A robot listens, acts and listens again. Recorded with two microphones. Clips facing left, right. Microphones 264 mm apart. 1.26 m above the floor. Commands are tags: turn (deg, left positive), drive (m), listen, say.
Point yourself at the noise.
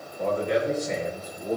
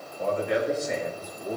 <turn deg="45"/>
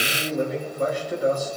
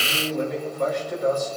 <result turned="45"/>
<turn deg="10"/>
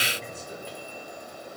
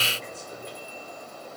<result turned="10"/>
<listen/>
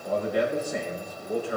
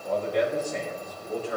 <turn deg="10"/>
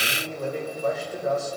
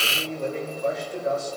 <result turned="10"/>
<say>Facing the man speaking.</say>